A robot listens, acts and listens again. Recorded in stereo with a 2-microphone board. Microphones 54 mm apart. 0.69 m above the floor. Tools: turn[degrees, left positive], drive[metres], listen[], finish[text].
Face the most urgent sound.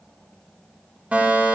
Thought: The fire alarm: about 30° right or 150° right.
Action: turn[-30]
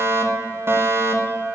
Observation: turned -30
Thought: So it is at 120° right.
Action: turn[-120]
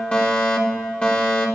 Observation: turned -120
Thought: The fire alarm is now 25° left.
Action: turn[25]
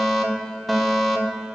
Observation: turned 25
Action: finish[Facing the fire alarm.]